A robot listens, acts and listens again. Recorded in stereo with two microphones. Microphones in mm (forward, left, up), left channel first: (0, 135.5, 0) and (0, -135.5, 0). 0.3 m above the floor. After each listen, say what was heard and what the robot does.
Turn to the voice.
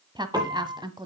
The woman speaking: about 15° right or 165° right. Turn 15° right.
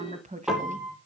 So it is at 150° right. Turn 150° right.
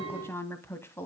The woman speaking is now 10° left. Turn 10° left.
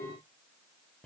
Keep listening.
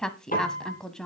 Found it: a woman speaking, straight ahead, 1 to 2 m away.